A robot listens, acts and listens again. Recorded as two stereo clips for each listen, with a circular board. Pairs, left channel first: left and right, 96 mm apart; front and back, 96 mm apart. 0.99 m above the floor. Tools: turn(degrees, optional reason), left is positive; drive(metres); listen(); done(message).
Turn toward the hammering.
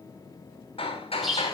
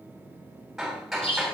turn(degrees=90, reason="The hammering: 90° left.")
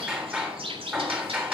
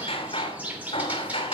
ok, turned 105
turn(degrees=-15, reason="The hammering is now 15° right.")
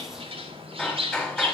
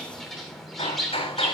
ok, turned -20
done("Found it: hammering, straight ahead, 2 to 4 m away.")